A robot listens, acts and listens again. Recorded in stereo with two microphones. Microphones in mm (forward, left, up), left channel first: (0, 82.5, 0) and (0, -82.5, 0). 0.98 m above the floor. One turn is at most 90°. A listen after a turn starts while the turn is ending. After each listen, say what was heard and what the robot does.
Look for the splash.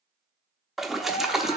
Turn 30° left.
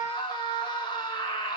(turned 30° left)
Keep listening.
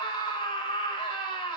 I heard a splash, but can't make it out now. It was about 30° right or 150° left.